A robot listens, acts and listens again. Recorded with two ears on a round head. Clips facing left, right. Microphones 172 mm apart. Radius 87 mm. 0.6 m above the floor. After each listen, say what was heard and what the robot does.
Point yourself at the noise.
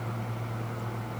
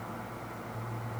Keep listening.
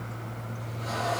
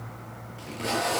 Turn 90° right.
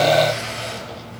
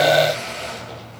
Found it: tape being pulled, straight ahead, over 4 m away.